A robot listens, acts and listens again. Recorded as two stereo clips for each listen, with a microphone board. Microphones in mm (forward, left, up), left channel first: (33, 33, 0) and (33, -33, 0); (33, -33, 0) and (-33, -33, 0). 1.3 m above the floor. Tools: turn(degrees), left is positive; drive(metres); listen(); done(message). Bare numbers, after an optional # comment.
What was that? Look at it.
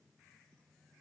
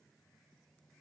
listen()
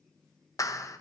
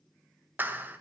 # The clap: 120° left.
turn(120)
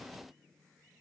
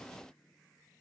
listen()
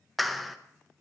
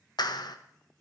done("Found it: a clap, straight ahead, 1 to 2 m away.")